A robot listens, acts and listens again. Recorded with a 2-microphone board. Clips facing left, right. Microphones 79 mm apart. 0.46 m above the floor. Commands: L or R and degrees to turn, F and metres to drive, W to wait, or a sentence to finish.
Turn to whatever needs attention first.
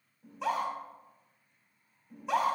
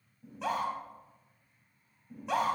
L30
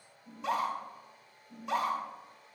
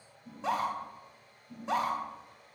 R30
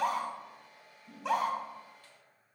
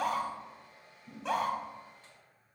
Facing the scream, 2 to 4 m away.